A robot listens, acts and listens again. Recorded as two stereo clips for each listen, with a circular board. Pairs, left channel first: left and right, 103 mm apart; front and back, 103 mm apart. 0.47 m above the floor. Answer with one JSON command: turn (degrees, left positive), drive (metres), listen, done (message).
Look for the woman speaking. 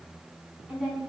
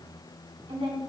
{"turn": -170}
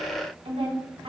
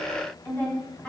{"turn": -75}
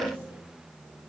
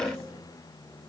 {"listen": true}
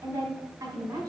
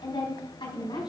{"turn": -30}
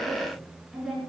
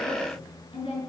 {"done": "Facing the woman speaking."}